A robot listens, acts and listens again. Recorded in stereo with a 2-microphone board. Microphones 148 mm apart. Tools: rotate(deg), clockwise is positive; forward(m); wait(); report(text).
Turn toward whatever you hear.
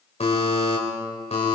rotate(-45)
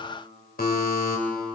rotate(-90)
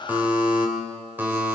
rotate(10)
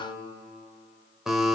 report("Facing the buzzer.")